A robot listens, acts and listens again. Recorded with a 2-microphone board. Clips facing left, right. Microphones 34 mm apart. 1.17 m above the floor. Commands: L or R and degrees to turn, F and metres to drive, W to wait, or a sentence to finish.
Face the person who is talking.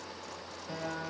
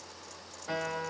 W
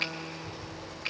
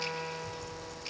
R25
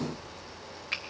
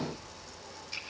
Found it: a child speaking, straight ahead.